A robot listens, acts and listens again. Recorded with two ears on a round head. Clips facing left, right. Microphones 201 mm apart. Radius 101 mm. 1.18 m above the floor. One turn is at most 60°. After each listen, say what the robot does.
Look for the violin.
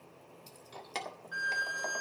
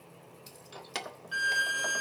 Turn 45° right.
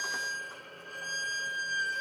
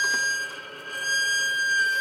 Turn 60° right.
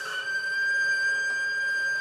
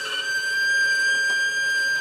Turn 50° right.
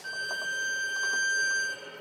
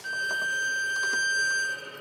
Found it: a violin, straight ahead, 1 to 2 m away.